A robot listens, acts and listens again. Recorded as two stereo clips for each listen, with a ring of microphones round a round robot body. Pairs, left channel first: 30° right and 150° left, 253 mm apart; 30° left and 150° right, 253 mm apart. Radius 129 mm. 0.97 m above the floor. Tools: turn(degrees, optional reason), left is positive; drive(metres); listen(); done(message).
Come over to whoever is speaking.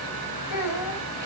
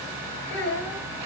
turn(degrees=-20, reason="The child speaking: 20° right.")
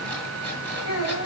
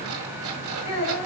drive(metres=1.0)
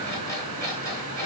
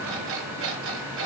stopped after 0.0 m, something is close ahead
listen()
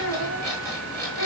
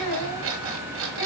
done("Something is in my way. I am facing the child speaking but have not reached it.")